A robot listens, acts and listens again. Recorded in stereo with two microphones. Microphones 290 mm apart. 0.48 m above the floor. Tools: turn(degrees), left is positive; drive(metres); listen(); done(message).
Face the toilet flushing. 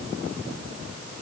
listen()
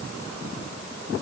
listen()
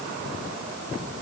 done("I can't make out a toilet flushing.")